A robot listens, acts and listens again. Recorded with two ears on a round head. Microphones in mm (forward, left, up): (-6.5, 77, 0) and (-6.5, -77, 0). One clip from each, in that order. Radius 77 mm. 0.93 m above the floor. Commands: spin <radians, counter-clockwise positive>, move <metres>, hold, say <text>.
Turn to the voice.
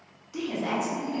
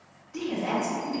spin 0.96
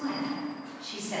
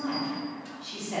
spin 0.87
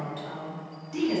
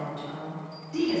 spin 0.61
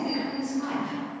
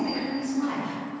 say Facing the woman speaking, 1 to 2 m away.